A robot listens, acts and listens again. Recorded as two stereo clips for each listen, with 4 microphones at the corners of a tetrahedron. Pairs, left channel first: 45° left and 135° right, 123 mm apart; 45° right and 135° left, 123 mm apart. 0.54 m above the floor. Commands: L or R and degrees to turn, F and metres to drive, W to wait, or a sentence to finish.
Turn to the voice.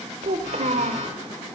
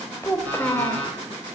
R115
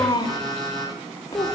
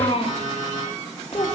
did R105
R10
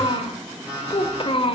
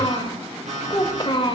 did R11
Found it: a child speaking, straight ahead, 1 to 2 m away.